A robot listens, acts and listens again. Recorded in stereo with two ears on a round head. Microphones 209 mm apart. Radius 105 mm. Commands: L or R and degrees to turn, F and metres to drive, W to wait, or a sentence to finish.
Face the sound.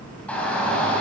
L30
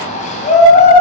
L145
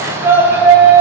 R10
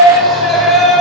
Found it: a shout, straight ahead, 2 to 4 m away.